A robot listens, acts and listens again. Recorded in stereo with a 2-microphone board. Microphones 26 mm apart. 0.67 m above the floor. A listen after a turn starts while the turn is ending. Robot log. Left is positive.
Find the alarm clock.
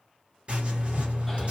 cmd idle
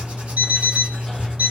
cmd yaw -90
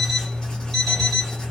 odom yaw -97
end: Facing the alarm clock, 1 to 2 m away.